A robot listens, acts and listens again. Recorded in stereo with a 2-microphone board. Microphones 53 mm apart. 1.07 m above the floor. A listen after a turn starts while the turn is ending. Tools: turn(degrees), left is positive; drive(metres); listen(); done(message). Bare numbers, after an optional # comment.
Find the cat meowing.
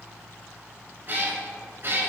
# The cat meowing: about 45° right or 135° right.
turn(-45)
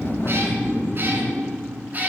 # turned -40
# So it is at 35° right.
turn(-35)
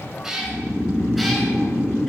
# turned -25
done("Facing the cat meowing.")